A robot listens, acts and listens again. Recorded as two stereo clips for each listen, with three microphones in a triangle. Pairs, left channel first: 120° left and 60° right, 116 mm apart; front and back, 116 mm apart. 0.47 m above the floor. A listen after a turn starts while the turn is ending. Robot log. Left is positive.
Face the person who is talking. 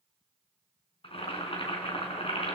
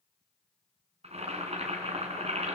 cmd idle
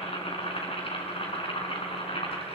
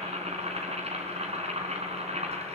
cmd idle
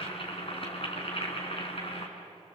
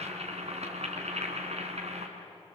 end: I can't make out anyone speaking to turn to.